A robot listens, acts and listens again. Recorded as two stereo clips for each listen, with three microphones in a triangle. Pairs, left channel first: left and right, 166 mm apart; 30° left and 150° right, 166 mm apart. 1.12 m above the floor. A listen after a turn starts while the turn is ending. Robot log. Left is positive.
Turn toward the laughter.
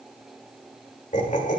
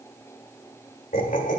note: The laughter: 60° left.
cmd yaw +60
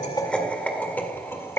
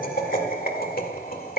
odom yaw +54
note: The laughter is now 15° left.
cmd yaw +15
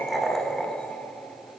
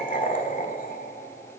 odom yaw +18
note: The laughter is now 10° left.
cmd yaw +10
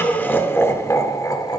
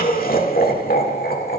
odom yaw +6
note: The laughter is now 25° left.
cmd yaw +25
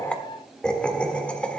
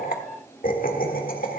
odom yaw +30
note: The laughter is now 10° left.
cmd yaw +10
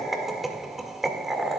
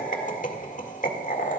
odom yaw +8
end: Found it: laughter, straight ahead, 1 to 2 m away.